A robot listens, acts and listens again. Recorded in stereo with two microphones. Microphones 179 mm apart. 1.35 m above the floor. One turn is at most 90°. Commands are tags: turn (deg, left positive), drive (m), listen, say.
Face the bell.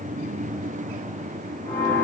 <turn deg="25"/>
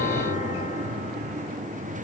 <listen/>
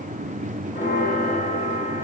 <turn deg="90"/>
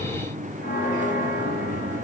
<turn deg="70"/>
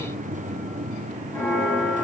<turn deg="20"/>
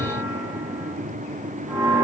<say>Facing the bell, over 4 m away.</say>